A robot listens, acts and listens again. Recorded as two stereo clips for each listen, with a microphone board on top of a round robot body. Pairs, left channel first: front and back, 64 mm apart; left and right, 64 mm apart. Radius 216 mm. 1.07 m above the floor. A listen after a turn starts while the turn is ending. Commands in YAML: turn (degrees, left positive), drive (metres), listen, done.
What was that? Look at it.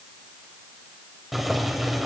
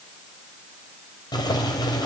turn: 95
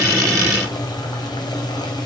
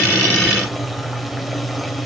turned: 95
done: "Found it: boiling, straight ahead."